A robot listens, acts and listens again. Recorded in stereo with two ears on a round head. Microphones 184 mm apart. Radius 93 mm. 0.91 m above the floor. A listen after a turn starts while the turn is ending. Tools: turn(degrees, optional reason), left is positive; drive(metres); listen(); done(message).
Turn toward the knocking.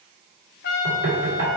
turn(degrees=-65, reason="The knocking: about 65° right or 115° right.")
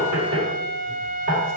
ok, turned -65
turn(degrees=-50, reason="So it is at 50° right.")
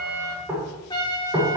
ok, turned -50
turn(degrees=-10, reason="The knocking is now 10° right.")
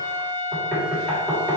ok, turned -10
done("Facing the knocking.")